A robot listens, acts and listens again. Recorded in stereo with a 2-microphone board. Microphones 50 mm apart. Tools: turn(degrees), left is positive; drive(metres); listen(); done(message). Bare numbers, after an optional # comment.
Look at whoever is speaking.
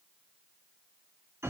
listen()
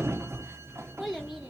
turn(-30)
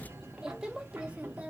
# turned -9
# The child speaking: about 30° right or 150° right.
turn(-30)
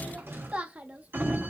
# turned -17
# The child speaking: about 35° right or 145° right.
turn(-35)
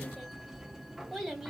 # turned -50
done("Facing the child speaking.")